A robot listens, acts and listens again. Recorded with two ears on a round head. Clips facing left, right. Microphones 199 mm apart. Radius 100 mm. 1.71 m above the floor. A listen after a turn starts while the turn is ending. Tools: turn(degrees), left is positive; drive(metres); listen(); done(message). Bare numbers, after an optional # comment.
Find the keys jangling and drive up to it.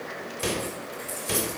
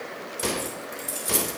# The keys jangling: about 45° right or 135° right.
turn(-45)
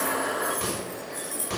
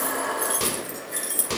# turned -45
# So it is at 85° right.
turn(-85)
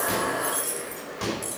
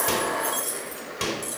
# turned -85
drive(1.0)
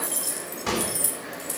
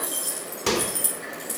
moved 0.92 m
drive(1.0)
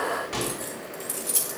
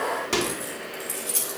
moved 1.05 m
drive(1.0)
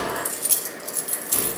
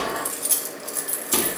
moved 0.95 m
drive(1.0)
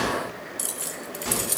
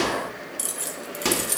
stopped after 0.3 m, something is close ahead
done("I am next to the keys jangling.")